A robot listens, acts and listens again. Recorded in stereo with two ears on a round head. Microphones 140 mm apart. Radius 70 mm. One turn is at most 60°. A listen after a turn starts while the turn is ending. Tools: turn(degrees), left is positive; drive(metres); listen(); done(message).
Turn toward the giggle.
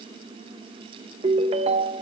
listen()
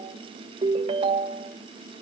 listen()
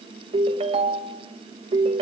done("I can't make out a giggle, only a ringtone.")